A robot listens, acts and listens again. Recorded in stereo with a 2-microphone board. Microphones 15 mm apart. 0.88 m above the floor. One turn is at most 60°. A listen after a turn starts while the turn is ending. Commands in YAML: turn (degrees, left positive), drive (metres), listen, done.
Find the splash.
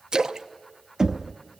turn: -60
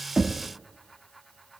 listen: true
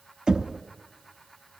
done: "I heard a splash, but can't make it out now. It was about 5° right or 55° right."